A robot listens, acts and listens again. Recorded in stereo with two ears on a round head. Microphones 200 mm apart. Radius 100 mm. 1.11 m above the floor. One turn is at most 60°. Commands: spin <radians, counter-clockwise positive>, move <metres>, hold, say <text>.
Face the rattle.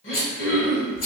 spin 1.05
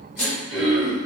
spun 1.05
spin 0.87
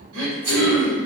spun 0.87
spin -0.35
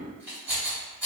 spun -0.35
spin -0.17
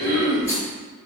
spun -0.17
hold
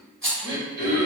say Facing the rattle.